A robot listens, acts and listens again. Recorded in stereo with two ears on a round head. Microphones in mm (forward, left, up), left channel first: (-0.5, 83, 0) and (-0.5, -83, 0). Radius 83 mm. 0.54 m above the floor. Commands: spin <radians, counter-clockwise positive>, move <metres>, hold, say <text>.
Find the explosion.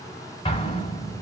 spin 0.52
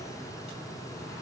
hold
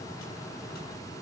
say I heard an explosion, but can't make it out now. It was about straight ahead or 120° left.